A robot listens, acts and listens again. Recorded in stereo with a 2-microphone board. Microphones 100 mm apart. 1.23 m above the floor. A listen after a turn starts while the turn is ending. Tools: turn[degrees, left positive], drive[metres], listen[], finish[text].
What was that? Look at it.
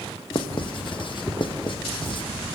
Thought: The writing: about 50° left or 130° left.
Action: turn[50]
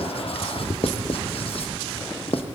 Thought: So it is at 75° left.
Action: turn[75]
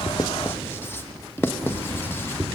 Thought: The writing is now 25° left.
Action: turn[25]
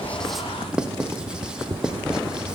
Thought: The writing is now 10° right.
Action: turn[-10]
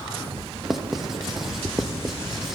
Action: finish[Facing the writing.]